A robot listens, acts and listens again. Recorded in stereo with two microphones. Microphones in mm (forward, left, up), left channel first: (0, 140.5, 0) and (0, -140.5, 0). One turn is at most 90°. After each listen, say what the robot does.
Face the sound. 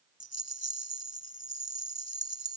Turn 60° left.
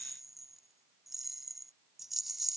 Facing the rattle.